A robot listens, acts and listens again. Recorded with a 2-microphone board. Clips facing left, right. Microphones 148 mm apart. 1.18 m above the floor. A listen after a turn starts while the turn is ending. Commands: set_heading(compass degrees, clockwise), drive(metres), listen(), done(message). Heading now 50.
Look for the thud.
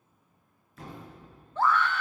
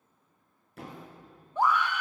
set_heading(115)
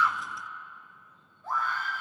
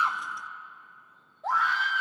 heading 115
listen()
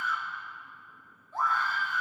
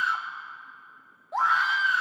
done("I heard a thud, but can't make it out now. It was about straight ahead or 50° right.")